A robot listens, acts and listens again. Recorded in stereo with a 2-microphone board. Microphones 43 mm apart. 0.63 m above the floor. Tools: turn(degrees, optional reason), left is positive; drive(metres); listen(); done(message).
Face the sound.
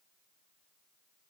listen()
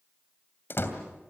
turn(degrees=55, reason="The door slam: about 55° left or 125° left.")
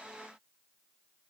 listen()
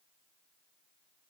done("I heard a door slam, but can't make it out now. It was about straight ahead or 70° left.")